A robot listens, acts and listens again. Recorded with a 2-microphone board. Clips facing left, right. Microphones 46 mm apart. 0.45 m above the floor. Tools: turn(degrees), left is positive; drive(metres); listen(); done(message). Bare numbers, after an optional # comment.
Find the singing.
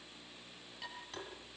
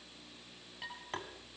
listen()
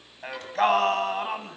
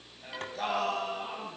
# The singing: about 50° left or 130° left.
turn(50)
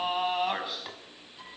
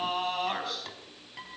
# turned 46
# So it is at 10° left.
turn(10)
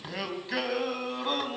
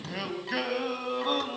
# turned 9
done("Found it: singing, straight ahead, 2 to 4 m away.")